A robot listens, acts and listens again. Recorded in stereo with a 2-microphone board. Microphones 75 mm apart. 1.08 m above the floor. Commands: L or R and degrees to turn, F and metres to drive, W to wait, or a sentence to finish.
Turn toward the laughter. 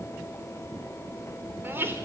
R30
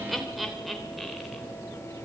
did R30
Facing the laughter, 2 to 4 m away.